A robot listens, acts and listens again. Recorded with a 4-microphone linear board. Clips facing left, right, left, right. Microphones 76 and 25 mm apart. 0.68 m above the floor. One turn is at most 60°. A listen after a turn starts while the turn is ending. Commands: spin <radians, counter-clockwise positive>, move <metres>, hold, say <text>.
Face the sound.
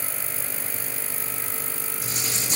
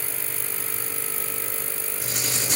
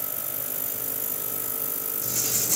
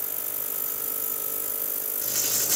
spin -1.05
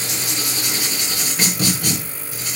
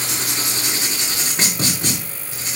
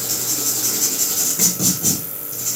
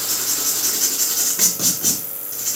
spin -0.52
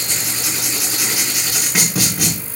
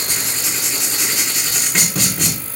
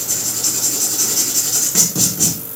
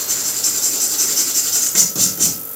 say Found it: writing, straight ahead, over 4 m away.